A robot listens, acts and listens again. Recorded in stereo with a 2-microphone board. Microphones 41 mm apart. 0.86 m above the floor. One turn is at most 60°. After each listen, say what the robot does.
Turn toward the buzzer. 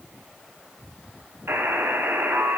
Turn 60° right.
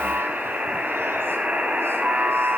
Turn 25° right.
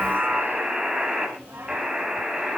Turn 10° right.
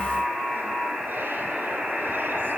Facing the buzzer.